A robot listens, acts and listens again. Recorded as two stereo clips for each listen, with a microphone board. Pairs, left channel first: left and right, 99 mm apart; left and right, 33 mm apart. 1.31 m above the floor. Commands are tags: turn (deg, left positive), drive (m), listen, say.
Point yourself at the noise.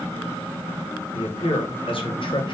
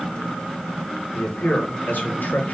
<turn deg="60"/>
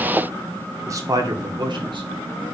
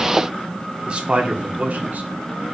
<turn deg="-50"/>
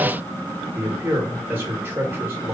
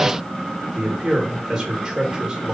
<turn deg="-20"/>
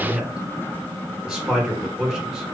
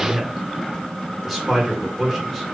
<say>Facing the man speaking, 1 to 2 m away.</say>